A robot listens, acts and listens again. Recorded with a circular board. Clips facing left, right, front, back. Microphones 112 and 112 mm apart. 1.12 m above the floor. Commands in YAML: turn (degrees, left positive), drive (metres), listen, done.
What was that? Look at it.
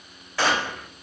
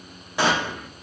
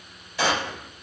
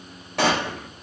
turn: -160
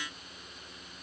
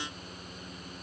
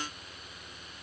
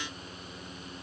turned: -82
turn: -80
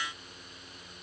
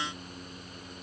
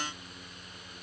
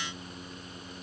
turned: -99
turn: 20
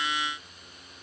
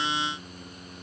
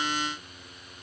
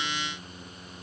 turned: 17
done: "Facing where the gunshot came from. I can't hear it now."